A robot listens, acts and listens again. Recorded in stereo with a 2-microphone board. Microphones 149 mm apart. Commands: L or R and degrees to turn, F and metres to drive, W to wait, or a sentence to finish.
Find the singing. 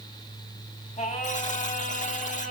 L55
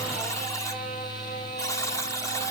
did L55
W
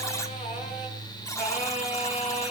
L50
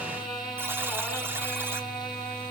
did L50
Found it: singing, straight ahead, over 4 m away.